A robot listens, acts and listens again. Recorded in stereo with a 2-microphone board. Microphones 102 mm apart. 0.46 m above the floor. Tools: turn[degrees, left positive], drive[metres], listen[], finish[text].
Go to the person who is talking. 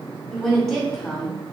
Action: turn[30]
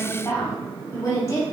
Thought: So it is at 145° left.
Action: turn[145]
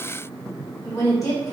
Thought: The woman speaking is now 35° left.
Action: turn[35]
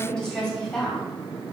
Action: drive[1.0]
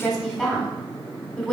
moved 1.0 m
Action: drive[1.0]
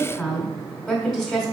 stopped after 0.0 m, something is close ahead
Action: finish[I am next to the woman speaking.]